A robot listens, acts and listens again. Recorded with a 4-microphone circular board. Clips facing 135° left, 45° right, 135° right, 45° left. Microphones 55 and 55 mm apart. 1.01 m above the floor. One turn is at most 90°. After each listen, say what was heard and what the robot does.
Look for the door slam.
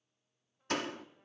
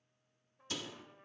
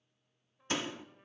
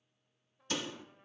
The door slam: 170° left. Turn 90° left.
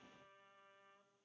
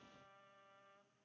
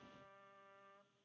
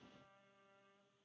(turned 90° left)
Nothing new. It was at 80° left. Turn 80° left.
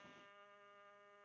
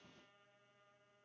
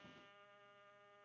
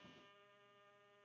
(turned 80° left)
I heard a door slam from this way, but can't make it out now.